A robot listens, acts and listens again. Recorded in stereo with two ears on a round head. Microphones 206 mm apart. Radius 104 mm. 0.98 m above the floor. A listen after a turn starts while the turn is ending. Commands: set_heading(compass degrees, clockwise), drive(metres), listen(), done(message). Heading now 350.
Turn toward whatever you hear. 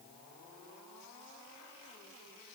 listen()
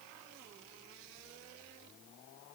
listen()
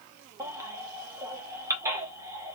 set_heading(20)
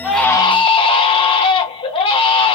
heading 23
set_heading(358)
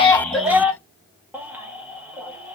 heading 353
done("Facing the baby crying, under 1 m away.")